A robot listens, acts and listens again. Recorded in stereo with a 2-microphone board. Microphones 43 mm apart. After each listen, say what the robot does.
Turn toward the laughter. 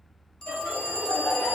Turn 90° left.
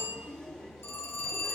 Keep listening.
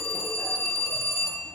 Keep listening.
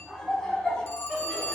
Turn 15° left.
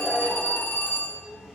Facing the laughter.